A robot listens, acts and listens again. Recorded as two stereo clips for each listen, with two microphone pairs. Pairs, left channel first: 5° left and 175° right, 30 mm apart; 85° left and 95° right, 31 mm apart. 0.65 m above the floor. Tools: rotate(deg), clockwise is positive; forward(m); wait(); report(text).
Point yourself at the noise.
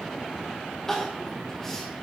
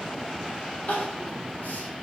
rotate(-75)
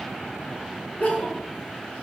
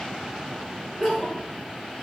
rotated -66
rotate(-10)
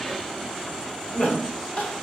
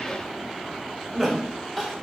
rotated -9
report("Found it: crying, straight ahead.")